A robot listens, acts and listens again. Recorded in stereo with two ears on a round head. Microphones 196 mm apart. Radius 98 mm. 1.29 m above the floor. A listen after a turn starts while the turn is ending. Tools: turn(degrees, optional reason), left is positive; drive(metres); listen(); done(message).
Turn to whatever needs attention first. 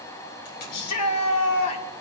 turn(degrees=90)
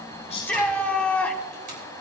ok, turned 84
done("Facing the shout.")